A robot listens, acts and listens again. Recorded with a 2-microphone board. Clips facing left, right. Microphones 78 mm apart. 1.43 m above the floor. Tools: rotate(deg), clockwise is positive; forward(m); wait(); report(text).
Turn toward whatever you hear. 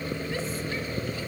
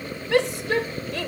rotate(90)
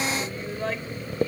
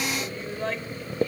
report("Found it: a shout, straight ahead.")